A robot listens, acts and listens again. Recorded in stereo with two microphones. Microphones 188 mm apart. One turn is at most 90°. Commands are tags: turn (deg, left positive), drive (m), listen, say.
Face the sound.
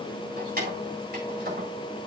<turn deg="-60"/>
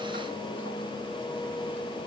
<listen/>
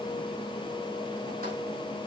<listen/>
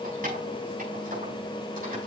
<say>I heard keys jangling, but can't make it out now. It was about straight ahead or 60° right.</say>